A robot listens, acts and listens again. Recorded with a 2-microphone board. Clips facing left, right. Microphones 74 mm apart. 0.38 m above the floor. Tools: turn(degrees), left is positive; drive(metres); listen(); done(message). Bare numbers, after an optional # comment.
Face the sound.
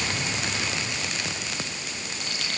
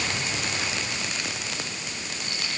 turn(90)
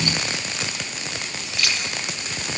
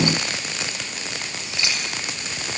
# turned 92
# So it is at 25° right.
turn(-25)
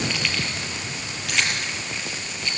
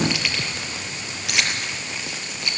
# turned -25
done("Found it: keys jangling, straight ahead.")